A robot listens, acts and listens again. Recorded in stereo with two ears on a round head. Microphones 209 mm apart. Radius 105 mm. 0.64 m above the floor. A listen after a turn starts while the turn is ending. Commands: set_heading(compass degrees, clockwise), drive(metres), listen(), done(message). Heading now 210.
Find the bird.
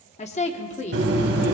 set_heading(265)
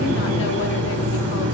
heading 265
set_heading(335)
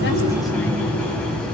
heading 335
done("Found it: a bird, straight ahead, 2 to 4 m away.")